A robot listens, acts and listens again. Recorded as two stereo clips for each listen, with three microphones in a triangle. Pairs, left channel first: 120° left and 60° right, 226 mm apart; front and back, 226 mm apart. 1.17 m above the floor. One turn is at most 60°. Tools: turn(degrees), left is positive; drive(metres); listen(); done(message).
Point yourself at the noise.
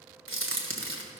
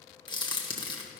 turn(degrees=-60)
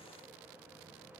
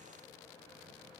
turn(degrees=-10)
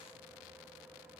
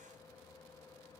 done("Facing where the crack came from. I can't hear it now.")